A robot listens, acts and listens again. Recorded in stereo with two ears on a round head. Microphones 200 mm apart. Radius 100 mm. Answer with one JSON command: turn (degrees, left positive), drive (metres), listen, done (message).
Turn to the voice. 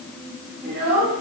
{"turn": -50}
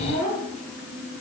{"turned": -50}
{"turn": -75}
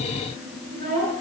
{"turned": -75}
{"turn": -35}
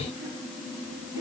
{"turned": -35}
{"listen": true}
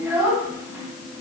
{"turn": -10}
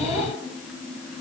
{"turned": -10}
{"done": "Facing the child speaking."}